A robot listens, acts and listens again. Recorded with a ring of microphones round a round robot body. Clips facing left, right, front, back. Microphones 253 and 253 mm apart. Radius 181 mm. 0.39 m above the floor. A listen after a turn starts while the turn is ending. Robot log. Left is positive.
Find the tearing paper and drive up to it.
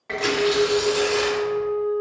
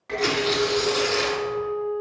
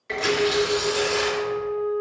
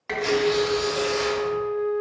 note: The tearing paper: 20° right.
cmd yaw -20
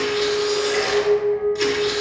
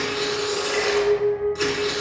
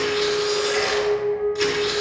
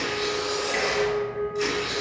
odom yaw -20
cmd fwd 1.0
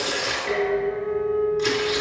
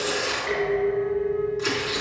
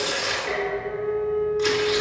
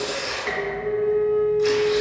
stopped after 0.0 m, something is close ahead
end: Blocked. The tearing paper is further on, straight ahead.